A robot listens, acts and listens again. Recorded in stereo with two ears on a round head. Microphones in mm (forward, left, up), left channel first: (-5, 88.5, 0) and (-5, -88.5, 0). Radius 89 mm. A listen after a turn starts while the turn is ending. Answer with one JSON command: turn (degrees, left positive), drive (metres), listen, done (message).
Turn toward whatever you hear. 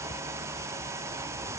{"listen": true}
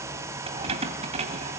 {"turn": -35}
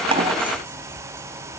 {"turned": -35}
{"listen": true}
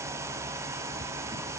{"listen": true}
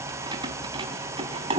{"turn": -25}
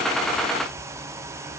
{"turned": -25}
{"listen": true}
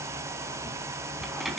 {"done": "Found it: keys jangling, straight ahead, 2 to 4 m away."}